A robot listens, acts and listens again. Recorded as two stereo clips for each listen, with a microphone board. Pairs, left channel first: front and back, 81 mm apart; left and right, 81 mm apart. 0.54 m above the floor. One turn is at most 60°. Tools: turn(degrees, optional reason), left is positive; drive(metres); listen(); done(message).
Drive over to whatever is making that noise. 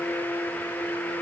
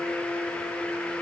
listen()
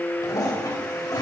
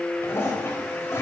turn(degrees=35, reason="The toilet flushing: 35° left.")
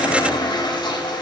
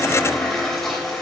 drive(metres=1.0)
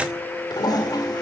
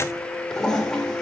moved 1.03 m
turn(degrees=10, reason="The toilet flushing is now 10° left.")
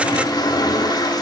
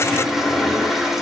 drive(metres=1.0)
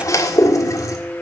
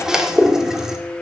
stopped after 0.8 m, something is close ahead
turn(degrees=-10, reason="The toilet flushing is now 10° right.")
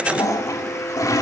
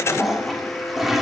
done("Arrived at the toilet flushing, straight ahead.")